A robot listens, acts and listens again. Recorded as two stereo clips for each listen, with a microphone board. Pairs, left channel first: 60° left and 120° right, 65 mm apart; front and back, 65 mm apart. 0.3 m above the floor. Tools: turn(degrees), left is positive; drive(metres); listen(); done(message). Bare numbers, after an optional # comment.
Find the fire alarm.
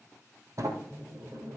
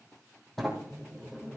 listen()
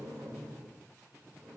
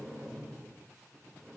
listen()
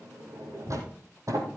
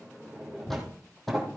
done("I can't make out a fire alarm, only a sliding door.")